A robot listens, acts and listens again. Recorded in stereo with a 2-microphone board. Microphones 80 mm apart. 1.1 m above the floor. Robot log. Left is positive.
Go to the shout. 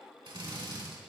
cmd idle
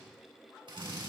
cmd idle
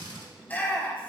note: The shout: about 20° left or 160° left.
cmd yaw +20
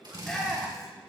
cmd fwd 1.0
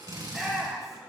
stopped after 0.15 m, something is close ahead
end: Blocked. The shout is further on, straight ahead.